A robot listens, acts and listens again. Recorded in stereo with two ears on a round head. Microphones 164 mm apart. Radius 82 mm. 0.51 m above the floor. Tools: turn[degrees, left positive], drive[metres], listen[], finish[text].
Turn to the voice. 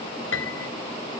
Action: listen[]
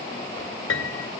Action: listen[]
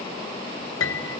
Action: finish[I can't make out anyone speaking to turn to.]